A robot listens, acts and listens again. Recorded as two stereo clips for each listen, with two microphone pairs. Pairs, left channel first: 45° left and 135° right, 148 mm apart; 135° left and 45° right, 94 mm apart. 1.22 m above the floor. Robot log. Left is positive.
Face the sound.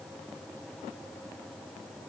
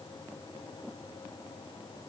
cmd idle
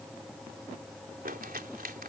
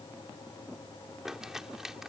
note: The crumpling: 130° right.
cmd yaw -130
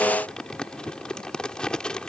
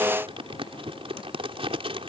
note: The crumpling is now 35° right.
cmd yaw -35
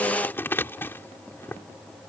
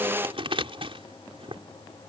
note: The crumpling is now 30° right.
cmd yaw -30
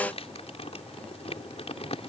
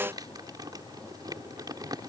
end: Found it: crumpling, straight ahead.